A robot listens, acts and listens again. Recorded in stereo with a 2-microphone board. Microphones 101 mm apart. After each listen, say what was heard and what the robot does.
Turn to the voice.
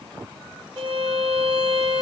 Keep listening.
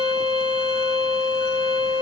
Keep listening.
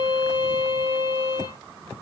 I can't make out anyone speaking to turn to.